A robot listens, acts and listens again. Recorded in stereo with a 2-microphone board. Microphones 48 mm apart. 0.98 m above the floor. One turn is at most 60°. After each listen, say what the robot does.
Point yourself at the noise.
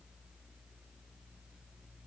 Keep listening.
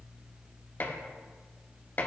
Turn 40° left.
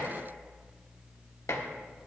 Turn 60° left.
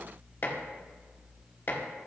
Turn 50° left.
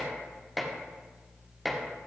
Facing the dishes clattering.